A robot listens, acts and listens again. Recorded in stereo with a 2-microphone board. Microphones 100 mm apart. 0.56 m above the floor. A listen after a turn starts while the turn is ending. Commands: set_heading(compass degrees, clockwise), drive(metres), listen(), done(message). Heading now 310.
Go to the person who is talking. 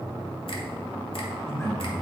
set_heading(280)
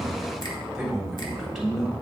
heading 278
drive(1.0)
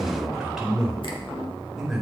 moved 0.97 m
drive(1.0)
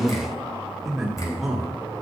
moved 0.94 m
drive(1.0)
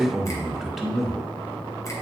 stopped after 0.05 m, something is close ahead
done("Arrived at the man speaking, straight ahead.")